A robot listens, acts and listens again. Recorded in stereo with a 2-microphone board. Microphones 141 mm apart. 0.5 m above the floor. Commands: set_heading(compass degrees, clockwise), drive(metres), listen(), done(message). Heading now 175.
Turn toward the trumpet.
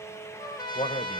set_heading(145)
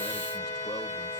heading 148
set_heading(23)
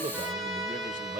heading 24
done("Found it: a trumpet, straight ahead.")